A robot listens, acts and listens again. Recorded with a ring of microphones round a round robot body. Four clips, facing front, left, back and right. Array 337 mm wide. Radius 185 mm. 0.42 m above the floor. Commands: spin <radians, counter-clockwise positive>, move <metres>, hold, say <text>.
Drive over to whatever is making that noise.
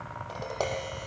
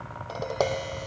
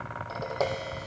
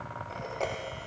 spin 1.66
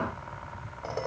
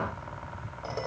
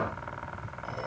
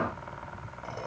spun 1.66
spin 0.35
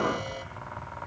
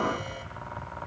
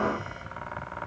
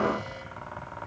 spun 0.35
hold
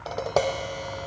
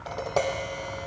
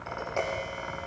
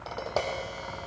move 1.0
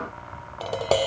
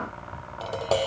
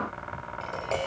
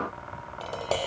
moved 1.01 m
move 1.0
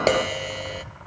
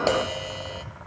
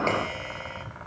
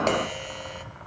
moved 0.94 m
move 1.0
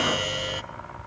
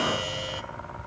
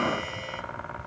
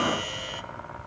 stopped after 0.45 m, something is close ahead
say I am next to the tapping.